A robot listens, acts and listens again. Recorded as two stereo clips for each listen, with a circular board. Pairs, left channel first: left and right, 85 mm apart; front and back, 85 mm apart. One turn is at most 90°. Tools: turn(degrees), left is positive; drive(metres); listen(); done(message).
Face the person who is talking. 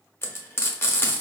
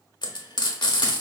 listen()
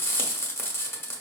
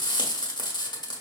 listen()
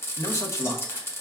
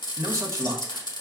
turn(degrees=90)
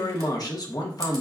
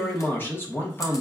turn(degrees=60)
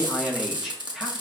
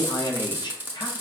turn(degrees=-10)
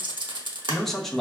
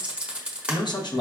done("Facing the man speaking, under 1 m away.")